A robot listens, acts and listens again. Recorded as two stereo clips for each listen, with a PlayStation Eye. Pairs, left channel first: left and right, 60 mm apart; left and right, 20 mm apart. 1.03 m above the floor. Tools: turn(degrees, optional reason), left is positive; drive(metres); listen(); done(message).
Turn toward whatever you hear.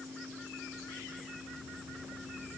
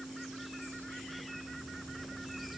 listen()
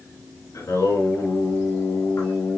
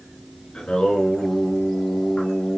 turn(degrees=65, reason="The singing: about 65° left or 115° left.")
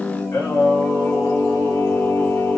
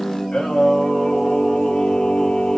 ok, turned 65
turn(degrees=45, reason="So it is at 45° left.")
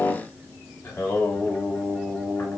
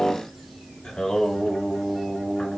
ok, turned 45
turn(degrees=45, reason="The singing is now 45° left.")
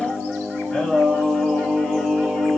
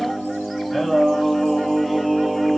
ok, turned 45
turn(degrees=10, reason="The singing is now 10° left.")
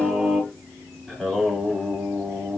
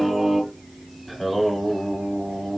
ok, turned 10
done("Facing the singing, over 4 m away.")